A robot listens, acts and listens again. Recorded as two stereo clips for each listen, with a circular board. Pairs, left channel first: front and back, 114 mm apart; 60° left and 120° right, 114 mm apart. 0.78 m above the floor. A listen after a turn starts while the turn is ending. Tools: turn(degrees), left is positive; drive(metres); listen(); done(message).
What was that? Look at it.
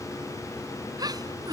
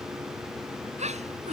turn(degrees=-125)
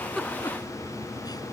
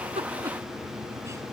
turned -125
listen()
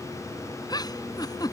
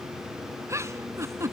turn(degrees=-55)
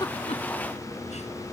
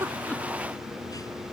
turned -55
listen()
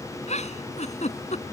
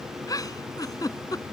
done("Facing the giggle.")